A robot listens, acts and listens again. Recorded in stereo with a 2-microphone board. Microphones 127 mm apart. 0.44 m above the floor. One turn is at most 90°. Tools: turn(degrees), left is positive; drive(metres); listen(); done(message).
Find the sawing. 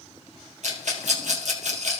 listen()
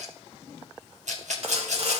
turn(degrees=-60)
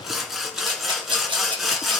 done("Found it: sawing, straight ahead.")